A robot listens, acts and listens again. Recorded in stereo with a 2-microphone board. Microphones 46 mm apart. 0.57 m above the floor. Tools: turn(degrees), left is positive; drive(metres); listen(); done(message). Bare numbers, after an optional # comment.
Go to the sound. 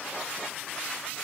listen()
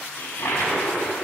turn(90)
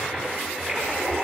# So it is at 10° right.
turn(-10)
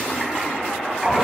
drive(1.0)
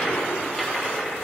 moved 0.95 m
# The toilet flushing is now 10° left.
turn(10)
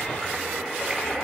drive(1.0)
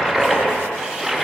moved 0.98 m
drive(1.0)
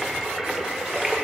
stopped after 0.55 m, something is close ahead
# The toilet flushing is now 10° right.
turn(-10)
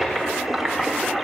done("I am next to the toilet flushing.")